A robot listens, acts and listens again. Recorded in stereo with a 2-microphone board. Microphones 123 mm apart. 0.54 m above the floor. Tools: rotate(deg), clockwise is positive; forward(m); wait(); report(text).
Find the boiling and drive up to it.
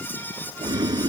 rotate(30)
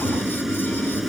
forward(1.0)
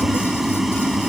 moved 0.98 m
forward(1.0)
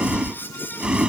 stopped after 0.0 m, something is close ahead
report("I am next to the boiling.")